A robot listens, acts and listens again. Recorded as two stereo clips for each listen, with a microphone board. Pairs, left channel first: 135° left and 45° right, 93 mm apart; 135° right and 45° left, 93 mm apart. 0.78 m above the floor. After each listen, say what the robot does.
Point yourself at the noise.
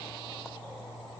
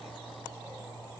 Keep listening.
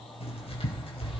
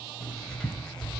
Turn 140° left.
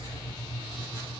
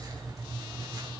Facing the writing, over 4 m away.